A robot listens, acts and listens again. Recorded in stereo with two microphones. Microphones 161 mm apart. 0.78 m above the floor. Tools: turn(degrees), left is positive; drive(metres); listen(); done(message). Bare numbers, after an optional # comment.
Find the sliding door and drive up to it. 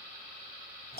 listen()
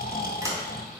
# The sliding door: about 20° right or 160° right.
turn(-20)
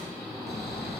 listen()
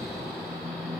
listen()
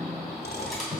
drive(1.0)
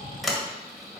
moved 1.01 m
drive(1.0)
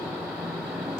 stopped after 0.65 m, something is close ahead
listen()
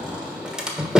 done("I am next to the sliding door.")